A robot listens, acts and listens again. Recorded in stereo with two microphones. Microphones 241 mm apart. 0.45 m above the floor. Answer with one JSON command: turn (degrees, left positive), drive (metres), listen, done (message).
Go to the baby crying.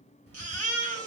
{"turn": 30}
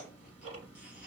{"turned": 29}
{"listen": true}
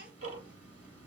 {"listen": true}
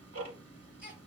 {"done": "I heard a baby crying, but can't make it out now. It was about 20° right or 140° left. I did not reach it."}